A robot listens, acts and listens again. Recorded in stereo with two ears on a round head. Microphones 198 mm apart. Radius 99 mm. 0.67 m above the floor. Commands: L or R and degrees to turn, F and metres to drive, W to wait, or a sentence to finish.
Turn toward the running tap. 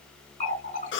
L30
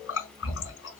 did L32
L115
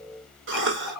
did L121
Found it: a running tap, straight ahead, 2 to 4 m away.